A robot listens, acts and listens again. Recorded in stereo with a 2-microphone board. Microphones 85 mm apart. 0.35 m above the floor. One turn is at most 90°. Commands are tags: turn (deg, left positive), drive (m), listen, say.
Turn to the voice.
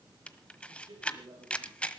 <turn deg="-90"/>
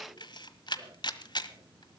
<listen/>
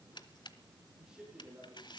<turn deg="-10"/>
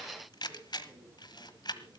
<listen/>
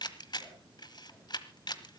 <listen/>
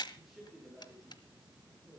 <say>Found it: a man speaking, straight ahead.</say>